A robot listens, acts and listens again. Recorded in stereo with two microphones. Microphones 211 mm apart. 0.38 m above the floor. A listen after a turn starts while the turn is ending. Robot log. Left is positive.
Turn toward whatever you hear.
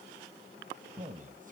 note: The man speaking: about 40° right or 140° right.
cmd yaw -40
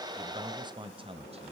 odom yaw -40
note: The man speaking: about 35° right or 145° right.
cmd yaw -35
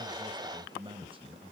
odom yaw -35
note: The man speaking: about 30° right or 150° right.
cmd yaw -30
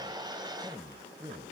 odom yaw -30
note: So it is at 20° right.
cmd yaw -20
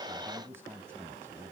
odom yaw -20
note: The man speaking is now 15° right.
cmd yaw -15
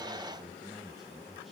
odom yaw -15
end: Found it: a man speaking, straight ahead, 2 to 4 m away.